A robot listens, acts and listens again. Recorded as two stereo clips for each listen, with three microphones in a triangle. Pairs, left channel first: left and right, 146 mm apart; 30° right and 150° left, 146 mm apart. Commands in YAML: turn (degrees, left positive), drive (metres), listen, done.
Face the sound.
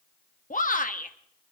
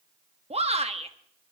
turn: 110
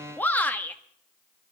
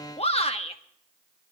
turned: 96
turn: 10
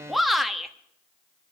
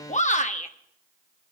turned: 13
done: "Facing the shout."